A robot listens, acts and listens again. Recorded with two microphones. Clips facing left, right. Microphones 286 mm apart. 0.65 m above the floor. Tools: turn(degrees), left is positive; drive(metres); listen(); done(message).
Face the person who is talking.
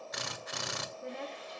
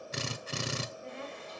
turn(degrees=55)
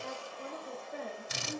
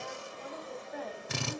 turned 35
turn(degrees=30)
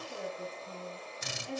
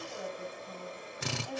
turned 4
turn(degrees=25)
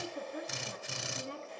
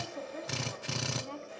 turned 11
turn(degrees=20)
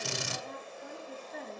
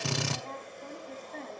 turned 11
done("Facing the woman speaking, over 4 m away.")